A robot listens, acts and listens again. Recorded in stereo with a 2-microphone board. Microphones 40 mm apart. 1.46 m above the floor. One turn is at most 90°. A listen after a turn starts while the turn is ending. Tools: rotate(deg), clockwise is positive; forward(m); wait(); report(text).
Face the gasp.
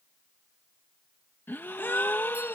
rotate(-65)
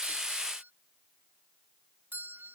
wait()
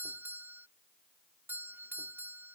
report("I heard a gasp, but can't make it out now. It was about straight ahead or 50° left.")